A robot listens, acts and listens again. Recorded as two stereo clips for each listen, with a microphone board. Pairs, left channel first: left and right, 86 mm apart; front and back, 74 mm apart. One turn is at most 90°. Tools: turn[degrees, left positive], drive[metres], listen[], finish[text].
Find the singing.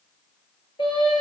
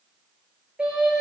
Thought: The singing: 105° left.
Action: turn[90]
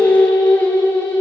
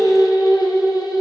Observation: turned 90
Thought: The singing is now 20° left.
Action: turn[20]
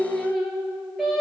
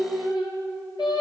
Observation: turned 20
Action: finish[Facing the singing.]